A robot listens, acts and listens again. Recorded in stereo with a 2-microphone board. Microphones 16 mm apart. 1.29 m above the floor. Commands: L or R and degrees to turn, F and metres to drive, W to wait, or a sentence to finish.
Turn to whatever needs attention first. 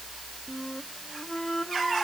W
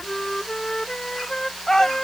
L35
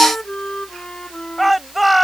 Facing the shout.